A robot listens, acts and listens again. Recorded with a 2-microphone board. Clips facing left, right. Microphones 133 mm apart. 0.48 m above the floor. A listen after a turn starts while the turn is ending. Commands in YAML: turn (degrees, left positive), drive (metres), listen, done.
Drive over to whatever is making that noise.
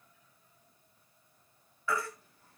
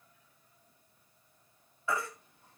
turn: -25
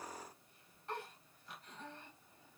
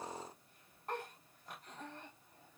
turn: -135
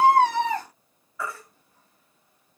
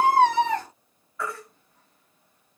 drive: 1.0
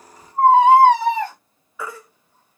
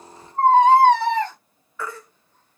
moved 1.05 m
turn: 10
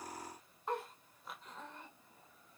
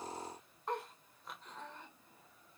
listen: true
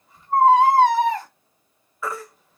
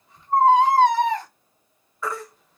drive: 1.0
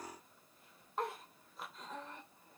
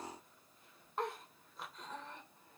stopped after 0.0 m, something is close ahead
listen: true
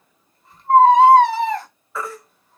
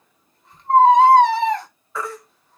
done: "I am next to the baby crying."